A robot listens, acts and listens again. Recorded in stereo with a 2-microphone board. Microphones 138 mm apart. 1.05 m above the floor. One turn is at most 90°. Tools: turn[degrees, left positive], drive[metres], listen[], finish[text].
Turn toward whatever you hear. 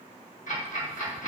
Thought: The ticking: about 65° left or 115° left.
Action: turn[65]
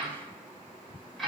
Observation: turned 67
Action: finish[Facing the ticking, 1 to 2 m away.]